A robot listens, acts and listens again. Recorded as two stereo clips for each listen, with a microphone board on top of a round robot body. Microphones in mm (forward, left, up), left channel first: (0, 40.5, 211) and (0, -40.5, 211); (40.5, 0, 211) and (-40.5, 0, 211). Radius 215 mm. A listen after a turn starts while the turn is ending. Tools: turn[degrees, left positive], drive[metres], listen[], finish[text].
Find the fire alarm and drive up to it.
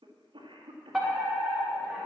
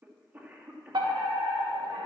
Thought: The fire alarm: 175° right.
Action: turn[-175]
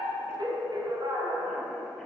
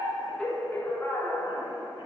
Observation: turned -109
Thought: The fire alarm is now 65° right.
Action: turn[-65]
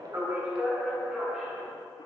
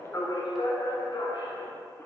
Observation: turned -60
Action: drive[1.0]
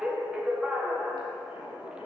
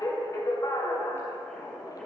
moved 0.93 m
Thought: The fire alarm is now 15° right.
Action: turn[-15]
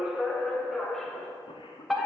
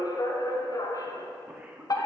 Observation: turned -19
Action: drive[1.0]
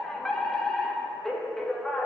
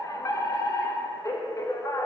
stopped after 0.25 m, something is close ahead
Action: finish[I am next to the fire alarm.]